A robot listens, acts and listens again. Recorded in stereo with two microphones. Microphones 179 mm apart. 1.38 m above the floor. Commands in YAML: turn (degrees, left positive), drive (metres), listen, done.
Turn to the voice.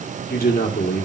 turn: 60
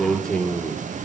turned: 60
done: "Found it: a man speaking, straight ahead, 1 to 2 m away."